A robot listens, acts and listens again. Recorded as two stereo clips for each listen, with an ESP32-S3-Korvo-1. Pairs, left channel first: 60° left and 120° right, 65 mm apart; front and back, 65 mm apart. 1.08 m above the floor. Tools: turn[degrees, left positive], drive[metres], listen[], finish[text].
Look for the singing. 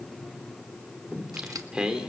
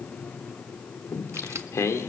Thought: The singing: 40° right.
Action: turn[-40]
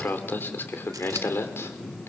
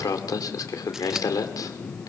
Thought: The singing is now 15° left.
Action: turn[15]
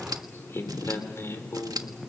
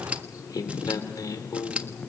Thought: The singing is now 15° left.
Action: turn[15]
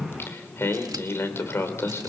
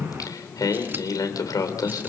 Thought: The singing is now 10° left.
Action: turn[10]
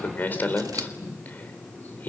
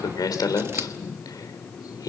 Action: finish[Found it: singing, straight ahead, 2 to 4 m away.]